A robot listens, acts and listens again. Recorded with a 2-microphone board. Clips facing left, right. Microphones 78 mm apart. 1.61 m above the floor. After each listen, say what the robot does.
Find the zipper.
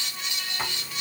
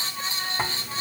Turn 40° right.
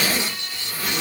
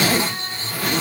Turn 95° right.
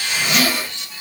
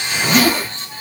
Turn 45° right.
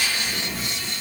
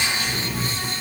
Found it: a zipper, straight ahead, under 1 m away.